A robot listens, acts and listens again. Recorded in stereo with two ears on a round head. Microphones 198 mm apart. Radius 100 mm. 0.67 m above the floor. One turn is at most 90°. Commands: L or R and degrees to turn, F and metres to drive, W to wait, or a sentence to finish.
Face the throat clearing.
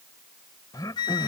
L15
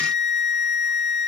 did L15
W
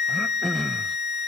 Facing the throat clearing.